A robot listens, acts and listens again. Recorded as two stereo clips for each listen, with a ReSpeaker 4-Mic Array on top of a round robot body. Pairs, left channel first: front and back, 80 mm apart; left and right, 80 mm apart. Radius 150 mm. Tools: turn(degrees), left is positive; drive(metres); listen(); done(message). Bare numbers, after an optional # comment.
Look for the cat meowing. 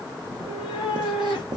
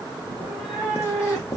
done("Facing the cat meowing, 1 to 2 m away.")